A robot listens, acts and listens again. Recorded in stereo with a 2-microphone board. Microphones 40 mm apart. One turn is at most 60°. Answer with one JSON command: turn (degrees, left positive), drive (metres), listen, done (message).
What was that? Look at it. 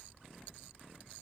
{"listen": true}
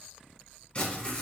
{"turn": 25}
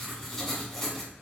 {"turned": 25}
{"done": "Found it: writing, straight ahead, 1 to 2 m away."}